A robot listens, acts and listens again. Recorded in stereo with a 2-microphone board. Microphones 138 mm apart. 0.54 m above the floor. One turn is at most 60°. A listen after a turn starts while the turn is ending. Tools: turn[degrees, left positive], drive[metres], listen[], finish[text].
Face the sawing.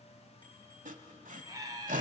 Thought: The sawing: about 75° right or 105° right.
Action: turn[-60]
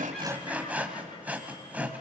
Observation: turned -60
Thought: So it is at 10° right.
Action: turn[-10]
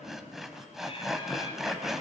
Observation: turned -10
Action: finish[Facing the sawing, 1 to 2 m away.]